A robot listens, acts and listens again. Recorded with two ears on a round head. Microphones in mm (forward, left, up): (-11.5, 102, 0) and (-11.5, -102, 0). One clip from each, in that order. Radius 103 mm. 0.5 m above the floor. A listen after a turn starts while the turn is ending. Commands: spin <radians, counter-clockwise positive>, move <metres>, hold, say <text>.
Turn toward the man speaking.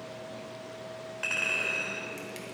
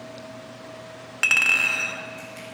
hold
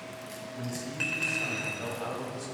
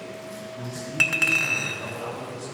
spin 0.35
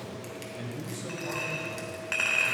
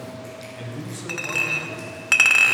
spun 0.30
say Facing the man speaking.